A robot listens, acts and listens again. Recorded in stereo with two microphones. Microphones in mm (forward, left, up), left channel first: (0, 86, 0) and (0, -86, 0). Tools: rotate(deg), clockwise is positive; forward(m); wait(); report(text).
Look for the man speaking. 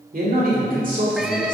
rotate(50)
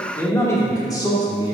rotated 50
rotate(-25)
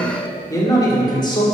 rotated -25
rotate(-25)
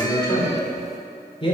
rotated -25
rotate(-30)
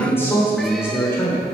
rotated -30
rotate(-15)
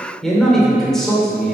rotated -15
report("Facing the man speaking, 2 to 4 m away.")